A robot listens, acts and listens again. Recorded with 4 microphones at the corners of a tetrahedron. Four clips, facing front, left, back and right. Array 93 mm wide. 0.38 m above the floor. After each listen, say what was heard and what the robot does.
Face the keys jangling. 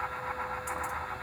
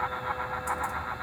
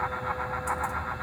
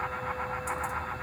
Keep listening.
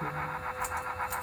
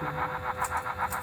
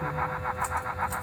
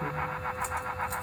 The keys jangling: 15° right. Turn 15° right.
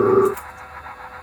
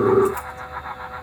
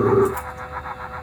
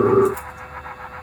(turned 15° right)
The keys jangling is now 10° right. Turn 10° right.
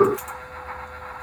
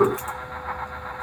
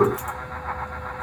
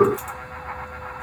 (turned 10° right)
Found it: keys jangling, straight ahead.